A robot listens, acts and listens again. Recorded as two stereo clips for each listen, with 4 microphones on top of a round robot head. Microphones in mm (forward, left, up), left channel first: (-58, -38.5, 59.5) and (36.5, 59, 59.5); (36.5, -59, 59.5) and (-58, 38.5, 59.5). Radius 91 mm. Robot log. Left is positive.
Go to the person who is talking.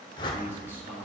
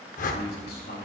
note: The man speaking: 30° right.
cmd yaw -30
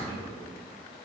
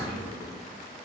cmd idle
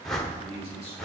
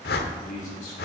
cmd fwd 1.0
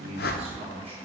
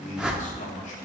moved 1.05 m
cmd fwd 1.0
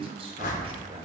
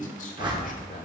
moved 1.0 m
note: The man speaking is now 10° right.
cmd yaw -10
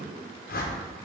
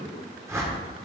cmd fwd 1.0
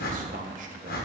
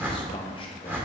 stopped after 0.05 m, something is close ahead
cmd idle
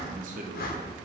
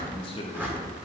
note: The man speaking is now 10° left.
cmd yaw +10
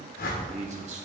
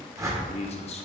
end: I am next to the man speaking.